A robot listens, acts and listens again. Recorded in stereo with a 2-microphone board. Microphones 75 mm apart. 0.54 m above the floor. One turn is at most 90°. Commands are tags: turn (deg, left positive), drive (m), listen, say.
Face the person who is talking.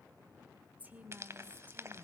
<turn deg="-20"/>
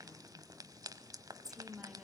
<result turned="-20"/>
<say>Found it: a woman speaking, straight ahead, 2 to 4 m away.</say>